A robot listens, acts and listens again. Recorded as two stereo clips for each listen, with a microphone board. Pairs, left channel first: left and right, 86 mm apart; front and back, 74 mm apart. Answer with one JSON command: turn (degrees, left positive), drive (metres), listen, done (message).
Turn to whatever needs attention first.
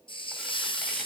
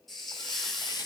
{"listen": true}
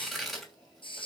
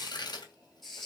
{"listen": true}
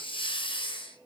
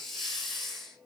{"done": "I can't make out anything urgent to turn to."}